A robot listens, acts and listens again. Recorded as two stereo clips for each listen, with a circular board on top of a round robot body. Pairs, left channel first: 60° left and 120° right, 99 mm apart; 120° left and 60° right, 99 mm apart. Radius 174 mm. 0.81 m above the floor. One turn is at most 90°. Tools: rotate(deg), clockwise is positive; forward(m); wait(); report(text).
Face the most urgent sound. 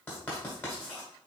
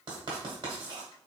wait()
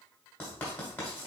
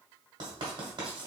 wait()
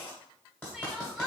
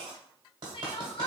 rotate(-90)
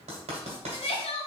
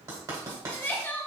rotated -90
rotate(-50)
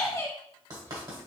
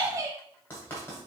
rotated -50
report("Facing the crying.")